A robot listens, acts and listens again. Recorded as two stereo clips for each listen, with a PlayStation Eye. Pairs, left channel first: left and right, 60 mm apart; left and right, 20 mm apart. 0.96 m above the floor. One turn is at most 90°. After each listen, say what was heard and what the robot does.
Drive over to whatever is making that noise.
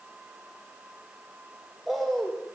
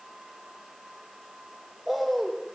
Turn 30° left.
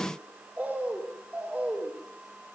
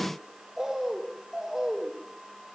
So it is at 30° right. Turn 30° right.
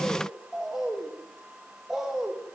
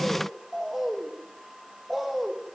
The bird is now 10° right. Turn 10° right.
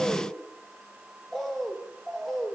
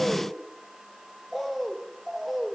Drive 1.0 m forward.
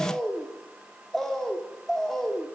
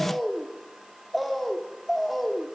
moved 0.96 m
Drive 1.0 m forward.
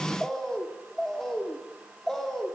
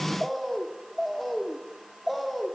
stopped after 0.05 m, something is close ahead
Blocked. The bird is further on, straight ahead.